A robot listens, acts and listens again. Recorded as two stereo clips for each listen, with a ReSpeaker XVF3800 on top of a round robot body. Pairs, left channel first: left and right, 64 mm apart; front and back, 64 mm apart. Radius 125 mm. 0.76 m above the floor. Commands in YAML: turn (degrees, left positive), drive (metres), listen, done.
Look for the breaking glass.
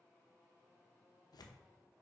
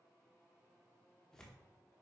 listen: true
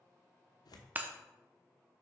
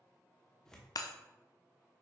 turn: -25
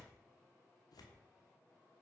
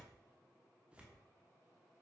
done: "I heard breaking glass from this way, but can't make it out now."